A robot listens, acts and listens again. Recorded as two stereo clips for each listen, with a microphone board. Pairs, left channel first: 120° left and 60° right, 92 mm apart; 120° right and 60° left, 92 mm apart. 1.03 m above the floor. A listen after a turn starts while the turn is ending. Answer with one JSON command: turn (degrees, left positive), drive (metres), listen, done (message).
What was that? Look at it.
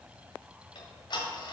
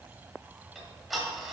{"turn": 150}
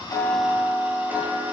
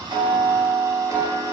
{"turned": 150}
{"turn": 10}
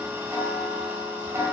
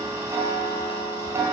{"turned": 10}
{"done": "Found it: ticking, straight ahead, 1 to 2 m away."}